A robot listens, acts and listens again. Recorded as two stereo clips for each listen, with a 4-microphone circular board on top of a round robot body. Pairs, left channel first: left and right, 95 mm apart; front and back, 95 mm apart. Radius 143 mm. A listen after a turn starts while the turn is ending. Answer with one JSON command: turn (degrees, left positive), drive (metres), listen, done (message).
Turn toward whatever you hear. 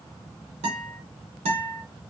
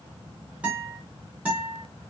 {"turn": -100}
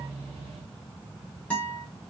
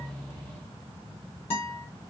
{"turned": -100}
{"turn": 15}
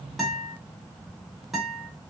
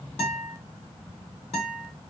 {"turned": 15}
{"done": "Facing the guitar."}